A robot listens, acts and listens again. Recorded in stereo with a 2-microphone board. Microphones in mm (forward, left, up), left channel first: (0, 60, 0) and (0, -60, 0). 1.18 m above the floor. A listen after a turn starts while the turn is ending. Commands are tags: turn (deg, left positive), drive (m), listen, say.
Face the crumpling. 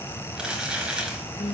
<turn deg="-30"/>
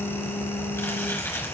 <turn deg="20"/>
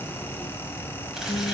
<listen/>
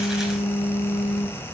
<listen/>
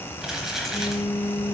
<say>Facing the crumpling, 2 to 4 m away.</say>